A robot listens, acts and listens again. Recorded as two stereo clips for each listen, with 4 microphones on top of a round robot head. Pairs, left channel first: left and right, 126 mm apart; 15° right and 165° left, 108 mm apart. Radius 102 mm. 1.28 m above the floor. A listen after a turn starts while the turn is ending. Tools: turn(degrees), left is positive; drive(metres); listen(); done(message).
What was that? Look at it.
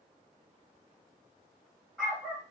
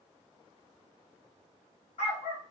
turn(degrees=10)
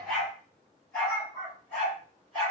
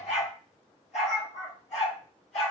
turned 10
turn(degrees=10)
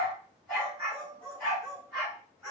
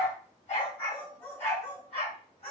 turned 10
turn(degrees=10)
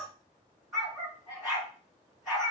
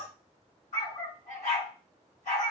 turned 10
done("Found it: a dog barking, straight ahead.")